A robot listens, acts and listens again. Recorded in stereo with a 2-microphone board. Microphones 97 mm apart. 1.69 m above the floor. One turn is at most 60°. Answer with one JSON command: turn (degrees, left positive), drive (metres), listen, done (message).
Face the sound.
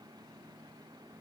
{"listen": true}
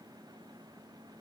{"listen": true}
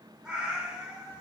{"turn": -30}
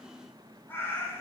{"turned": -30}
{"turn": 25}
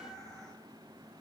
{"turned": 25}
{"done": "Facing the cat meowing, 2 to 4 m away."}